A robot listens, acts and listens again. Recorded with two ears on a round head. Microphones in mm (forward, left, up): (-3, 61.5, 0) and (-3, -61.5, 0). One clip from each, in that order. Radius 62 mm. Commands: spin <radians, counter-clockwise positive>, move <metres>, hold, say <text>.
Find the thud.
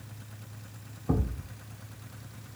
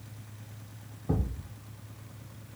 spin 1.57
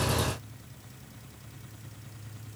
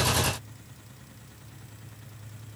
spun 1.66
say I heard a thud from this way, but can't make it out now.